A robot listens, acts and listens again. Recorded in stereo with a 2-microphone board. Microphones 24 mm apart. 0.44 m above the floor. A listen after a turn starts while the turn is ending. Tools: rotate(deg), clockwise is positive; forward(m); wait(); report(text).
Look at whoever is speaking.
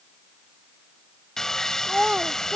rotate(45)
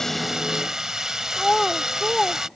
report("Found it: a child speaking, straight ahead.")